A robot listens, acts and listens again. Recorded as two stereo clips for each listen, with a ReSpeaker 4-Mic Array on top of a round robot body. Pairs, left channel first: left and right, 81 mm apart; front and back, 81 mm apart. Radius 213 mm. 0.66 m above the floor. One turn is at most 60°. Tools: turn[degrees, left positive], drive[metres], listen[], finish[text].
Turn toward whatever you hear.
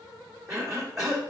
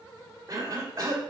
Thought: The cough: 135° right.
Action: turn[-60]
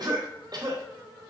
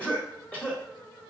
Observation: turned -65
Thought: The cough is now 70° right.
Action: turn[-60]
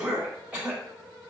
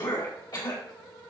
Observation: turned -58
Thought: The cough is now 15° right.
Action: turn[-15]
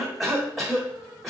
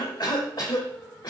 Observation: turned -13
Action: finish[Facing the cough, 1 to 2 m away.]